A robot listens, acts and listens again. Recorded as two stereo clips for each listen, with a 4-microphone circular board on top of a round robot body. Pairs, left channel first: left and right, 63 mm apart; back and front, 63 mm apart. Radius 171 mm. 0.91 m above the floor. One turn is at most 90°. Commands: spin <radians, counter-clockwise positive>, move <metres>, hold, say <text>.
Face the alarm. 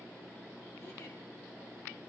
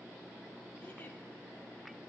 hold
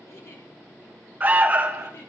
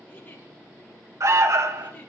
spin -0.52
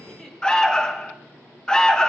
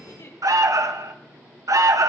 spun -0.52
spin 0.26
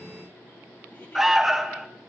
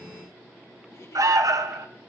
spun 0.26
say Found it: an alarm, straight ahead.